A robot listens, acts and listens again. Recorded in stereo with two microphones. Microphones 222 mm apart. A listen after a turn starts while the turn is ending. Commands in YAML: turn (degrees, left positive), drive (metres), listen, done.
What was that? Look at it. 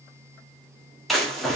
turn: 30
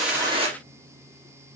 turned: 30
listen: true
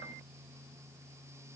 done: "I heard a splash, but can't make it out now. It was about 30° right or 150° left."